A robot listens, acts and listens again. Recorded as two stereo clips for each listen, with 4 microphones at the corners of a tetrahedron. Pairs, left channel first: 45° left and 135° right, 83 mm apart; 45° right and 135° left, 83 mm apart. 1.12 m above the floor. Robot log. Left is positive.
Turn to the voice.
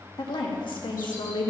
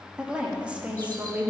note: The woman speaking: 65° left.
cmd yaw +65
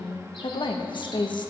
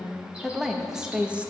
note: The woman speaking is now 65° left.
cmd yaw +65
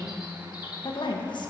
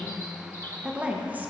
note: The woman speaking is now 70° left.
cmd yaw +70
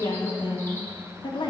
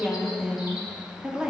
note: The woman speaking is now 55° left.
cmd yaw +55
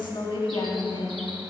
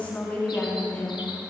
note: The woman speaking is now 30° left.
cmd yaw +30
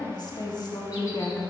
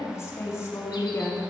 note: The woman speaking is now 10° left.
cmd yaw +10
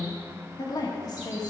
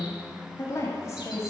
note: The woman speaking is now 10° left.
cmd yaw +10
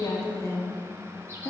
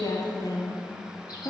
end: Found it: a woman speaking, straight ahead, 1 to 2 m away.